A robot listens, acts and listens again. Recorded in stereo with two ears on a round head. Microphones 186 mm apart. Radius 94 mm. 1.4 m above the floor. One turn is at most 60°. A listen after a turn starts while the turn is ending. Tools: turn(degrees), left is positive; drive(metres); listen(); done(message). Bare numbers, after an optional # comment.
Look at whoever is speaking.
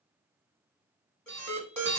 listen()
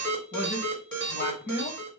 # The man speaking: about 45° left or 135° left.
turn(45)
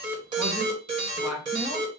done("Facing the man speaking.")